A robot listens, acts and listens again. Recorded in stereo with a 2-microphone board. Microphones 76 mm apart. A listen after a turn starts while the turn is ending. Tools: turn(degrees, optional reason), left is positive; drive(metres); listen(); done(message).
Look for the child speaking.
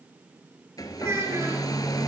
turn(degrees=-40, reason="The child speaking: about 40° right or 140° right.")
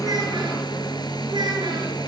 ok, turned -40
turn(degrees=-95, reason="So it is at 95° right.")
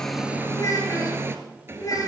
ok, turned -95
turn(degrees=50, reason="The child speaking is now 50° left.")
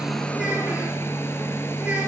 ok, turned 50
listen()
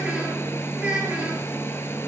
turn(degrees=-15, reason="The child speaking is now 15° right.")
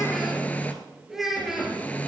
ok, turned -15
done("Facing the child speaking.")